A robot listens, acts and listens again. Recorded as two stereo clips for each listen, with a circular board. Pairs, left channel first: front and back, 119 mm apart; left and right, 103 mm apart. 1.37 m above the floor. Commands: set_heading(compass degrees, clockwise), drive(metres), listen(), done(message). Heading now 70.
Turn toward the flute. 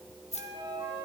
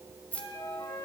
set_heading(300)
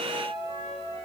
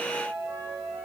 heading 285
set_heading(305)
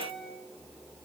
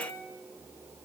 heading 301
done("Found it: a flute, straight ahead, over 4 m away.")